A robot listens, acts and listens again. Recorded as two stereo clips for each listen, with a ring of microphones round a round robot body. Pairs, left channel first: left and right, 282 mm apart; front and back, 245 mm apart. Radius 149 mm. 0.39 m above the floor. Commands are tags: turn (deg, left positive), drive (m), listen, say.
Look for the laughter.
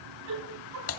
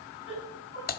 <turn deg="-70"/>
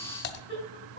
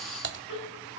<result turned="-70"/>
<turn deg="20"/>
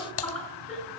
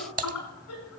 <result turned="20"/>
<say>Facing the laughter, over 4 m away.</say>